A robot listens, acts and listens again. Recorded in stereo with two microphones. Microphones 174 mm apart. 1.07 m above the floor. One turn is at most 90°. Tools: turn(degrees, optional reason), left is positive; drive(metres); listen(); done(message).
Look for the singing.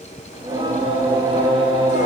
turn(degrees=-30, reason="The singing: about 30° right or 150° right.")
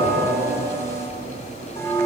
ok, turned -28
turn(degrees=-90, reason="So it is at 125° right.")
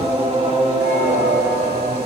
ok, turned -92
turn(degrees=-35, reason="The singing is now 35° right.")
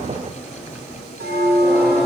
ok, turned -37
done("Facing the singing, under 1 m away.")